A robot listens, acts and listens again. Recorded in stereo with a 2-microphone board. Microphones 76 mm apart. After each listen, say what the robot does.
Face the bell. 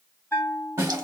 Turn 30° left.
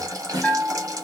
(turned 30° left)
Turn 15° right.
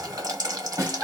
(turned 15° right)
Facing the bell, 1 to 2 m away.